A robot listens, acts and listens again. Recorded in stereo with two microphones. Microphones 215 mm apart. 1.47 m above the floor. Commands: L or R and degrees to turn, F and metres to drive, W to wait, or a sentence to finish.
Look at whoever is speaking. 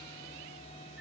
W
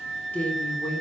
L30
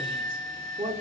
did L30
R25
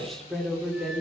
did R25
Found it: a woman speaking, straight ahead.